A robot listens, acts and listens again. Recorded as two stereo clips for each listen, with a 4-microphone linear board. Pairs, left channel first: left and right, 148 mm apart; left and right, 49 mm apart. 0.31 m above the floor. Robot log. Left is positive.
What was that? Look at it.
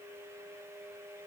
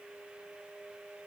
cmd idle
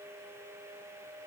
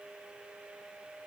cmd idle
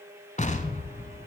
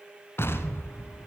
note: The explosion: about 55° left or 125° left.
cmd yaw +55
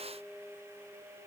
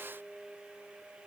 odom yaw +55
cmd idle
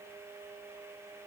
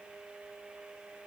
end: I heard an explosion, but can't make it out now. It was about straight ahead or 70° left.